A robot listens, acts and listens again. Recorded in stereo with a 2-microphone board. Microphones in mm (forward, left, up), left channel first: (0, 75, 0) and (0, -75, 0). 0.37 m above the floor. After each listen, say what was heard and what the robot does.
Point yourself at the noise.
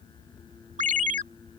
The ringtone: about 60° right or 120° right. Turn 60° right.
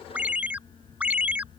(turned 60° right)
So it is at 10° right. Turn 10° right.
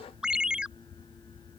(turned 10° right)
Found it: a ringtone, straight ahead.